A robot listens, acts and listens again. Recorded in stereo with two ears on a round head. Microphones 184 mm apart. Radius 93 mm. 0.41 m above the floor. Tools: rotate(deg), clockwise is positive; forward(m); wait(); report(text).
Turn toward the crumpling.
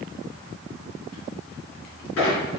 wait()
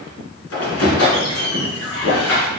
wait()
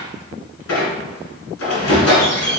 report("I can't make out crumpling to turn to.")